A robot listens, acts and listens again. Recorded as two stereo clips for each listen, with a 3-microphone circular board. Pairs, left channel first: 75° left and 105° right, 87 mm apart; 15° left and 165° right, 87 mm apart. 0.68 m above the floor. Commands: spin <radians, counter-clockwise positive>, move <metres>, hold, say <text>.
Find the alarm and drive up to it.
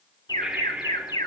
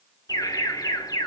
spin 0.87
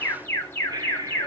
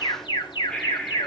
spin 0.26
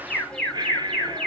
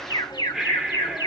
move 1.0
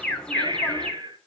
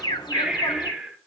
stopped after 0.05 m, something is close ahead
say Something is in my way. I am facing the alarm but have not reached it.